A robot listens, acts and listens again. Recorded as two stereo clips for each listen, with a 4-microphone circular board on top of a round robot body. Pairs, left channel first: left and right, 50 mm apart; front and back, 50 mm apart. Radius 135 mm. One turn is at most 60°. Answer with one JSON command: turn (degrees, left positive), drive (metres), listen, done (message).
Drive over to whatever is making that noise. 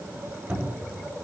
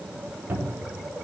{"turn": -60}
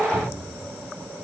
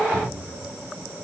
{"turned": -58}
{"turn": -60}
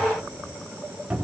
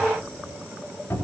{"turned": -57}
{"turn": -20}
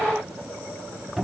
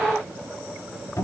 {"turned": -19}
{"drive": 1.0}
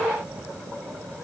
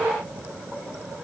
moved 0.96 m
{"listen": true}
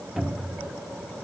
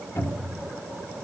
{"drive": 1.0}
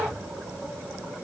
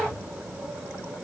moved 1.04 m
{"listen": true}
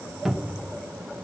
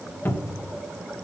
{"drive": 1.0}
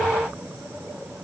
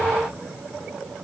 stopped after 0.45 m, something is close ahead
{"listen": true}
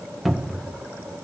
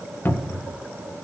{"done": "I am next to the cupboard door."}